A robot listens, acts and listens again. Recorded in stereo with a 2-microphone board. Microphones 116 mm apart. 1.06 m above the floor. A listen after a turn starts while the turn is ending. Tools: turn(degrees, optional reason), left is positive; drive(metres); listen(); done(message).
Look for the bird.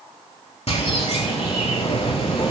turn(degrees=65, reason="The bird: about 65° left or 115° left.")
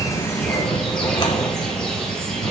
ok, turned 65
turn(degrees=10, reason="So it is at 10° left.")
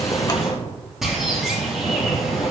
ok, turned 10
done("Facing the bird.")